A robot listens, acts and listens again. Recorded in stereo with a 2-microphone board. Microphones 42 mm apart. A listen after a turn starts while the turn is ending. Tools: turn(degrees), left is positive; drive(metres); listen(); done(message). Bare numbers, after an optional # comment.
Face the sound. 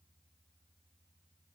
listen()
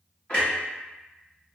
# The clunk: about 25° left or 155° left.
turn(25)
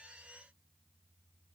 listen()
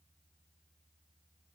done("I heard a clunk, but can't make it out now. It was about straight ahead or 130° left.")